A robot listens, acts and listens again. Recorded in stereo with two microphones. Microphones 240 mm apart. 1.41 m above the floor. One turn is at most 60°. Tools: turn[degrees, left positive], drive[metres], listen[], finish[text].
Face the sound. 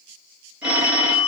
Action: turn[-30]
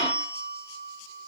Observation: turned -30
Thought: So it is at 25° left.
Action: turn[25]
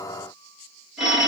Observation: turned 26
Action: finish[Facing the phone ringing.]